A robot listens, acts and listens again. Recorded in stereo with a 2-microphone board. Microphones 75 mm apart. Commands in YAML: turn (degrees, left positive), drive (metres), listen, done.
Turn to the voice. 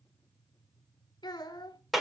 turn: 70
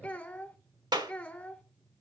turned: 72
turn: 20
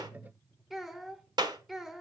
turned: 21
done: "Found it: a child speaking, straight ahead."